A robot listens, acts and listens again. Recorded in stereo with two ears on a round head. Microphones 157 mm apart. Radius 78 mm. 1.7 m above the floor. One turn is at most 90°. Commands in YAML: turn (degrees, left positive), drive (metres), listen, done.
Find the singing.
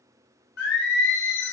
turn: 65
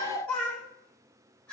done: "Facing the singing, under 1 m away."